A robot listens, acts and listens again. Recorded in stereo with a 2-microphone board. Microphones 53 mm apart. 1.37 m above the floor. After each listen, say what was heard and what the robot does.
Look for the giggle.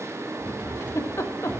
The giggle: about 55° left or 125° left. Turn 55° left.
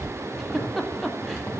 Facing the giggle.